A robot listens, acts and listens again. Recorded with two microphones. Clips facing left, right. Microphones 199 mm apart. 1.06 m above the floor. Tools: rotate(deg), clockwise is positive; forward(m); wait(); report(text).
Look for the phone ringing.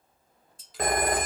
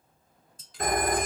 rotate(-90)
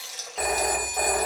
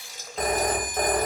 report("Found it: a phone ringing, straight ahead, under 1 m away.")